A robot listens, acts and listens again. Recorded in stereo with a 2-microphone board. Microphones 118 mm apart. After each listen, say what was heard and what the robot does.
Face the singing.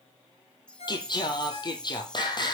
The singing: about 40° left or 140° left. Turn 40° left.
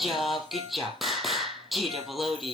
Found it: singing, straight ahead, 2 to 4 m away.